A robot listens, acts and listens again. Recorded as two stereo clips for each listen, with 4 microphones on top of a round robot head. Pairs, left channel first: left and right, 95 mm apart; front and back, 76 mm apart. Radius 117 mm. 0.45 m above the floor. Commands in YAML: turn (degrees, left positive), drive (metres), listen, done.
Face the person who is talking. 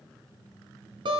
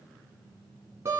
listen: true
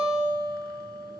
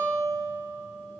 listen: true
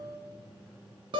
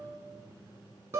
done: "I can't make out anyone speaking to turn to."